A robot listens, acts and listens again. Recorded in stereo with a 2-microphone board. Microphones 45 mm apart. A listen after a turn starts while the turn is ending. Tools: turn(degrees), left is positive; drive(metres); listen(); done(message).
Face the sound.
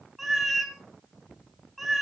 turn(degrees=-30)
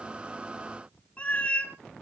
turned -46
turn(degrees=40)
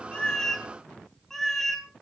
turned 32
turn(degrees=10)
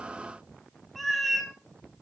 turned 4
done("Facing the cat meowing.")